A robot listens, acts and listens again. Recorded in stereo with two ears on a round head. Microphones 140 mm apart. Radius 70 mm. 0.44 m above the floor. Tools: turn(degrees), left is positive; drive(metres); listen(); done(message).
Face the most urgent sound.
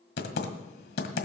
listen()
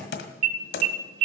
turn(degrees=-55)
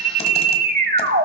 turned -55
turn(degrees=-60)
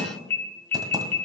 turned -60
turn(degrees=15)
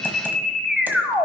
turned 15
done("Found it: an alarm, straight ahead.")